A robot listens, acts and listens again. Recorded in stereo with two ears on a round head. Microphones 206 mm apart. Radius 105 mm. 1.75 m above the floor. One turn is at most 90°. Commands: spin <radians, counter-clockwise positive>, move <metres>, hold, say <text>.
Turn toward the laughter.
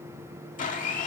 hold
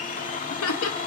spin 1.13
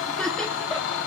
say Facing the laughter.